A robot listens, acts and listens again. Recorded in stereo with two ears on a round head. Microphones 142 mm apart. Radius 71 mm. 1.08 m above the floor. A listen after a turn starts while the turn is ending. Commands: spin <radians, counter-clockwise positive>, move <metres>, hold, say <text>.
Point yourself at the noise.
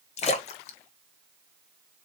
spin 0.79
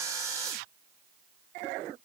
hold
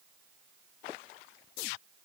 say I heard a splash, but can't make it out now. It was about straight ahead or 90° left.